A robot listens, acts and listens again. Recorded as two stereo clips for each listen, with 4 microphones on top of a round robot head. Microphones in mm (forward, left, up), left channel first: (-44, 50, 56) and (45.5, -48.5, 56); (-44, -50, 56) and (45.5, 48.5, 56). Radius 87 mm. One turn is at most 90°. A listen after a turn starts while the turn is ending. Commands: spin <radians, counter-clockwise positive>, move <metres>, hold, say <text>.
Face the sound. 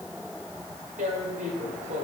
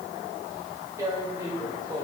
spin -0.35
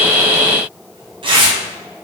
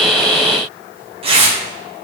say Facing the tearing paper.